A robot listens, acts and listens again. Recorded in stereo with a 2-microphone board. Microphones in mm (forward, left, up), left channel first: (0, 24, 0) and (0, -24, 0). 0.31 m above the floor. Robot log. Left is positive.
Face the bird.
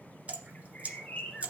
note: The bird: about 20° left or 160° left.
cmd yaw +20
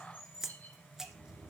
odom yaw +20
note: So it is at 140° left.
cmd yaw +140
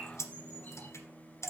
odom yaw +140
cmd idle
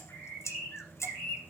note: The bird is now 30° left.
cmd yaw +30
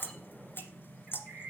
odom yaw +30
end: Facing the bird.